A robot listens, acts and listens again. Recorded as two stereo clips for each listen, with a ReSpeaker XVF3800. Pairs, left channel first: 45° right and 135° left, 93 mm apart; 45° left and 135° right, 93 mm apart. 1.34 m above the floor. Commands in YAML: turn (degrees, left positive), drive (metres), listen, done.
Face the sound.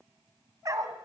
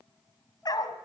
turn: 85
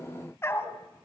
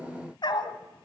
turn: 15
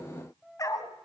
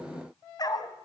done: "Found it: a dog barking, straight ahead."